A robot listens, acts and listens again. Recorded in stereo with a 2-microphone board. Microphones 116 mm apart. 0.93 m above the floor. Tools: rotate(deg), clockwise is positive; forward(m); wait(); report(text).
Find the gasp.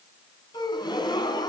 rotate(-40)
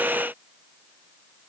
wait()
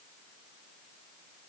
report("I heard a gasp, but can't make it out now. It was about straight ahead or 100° left.")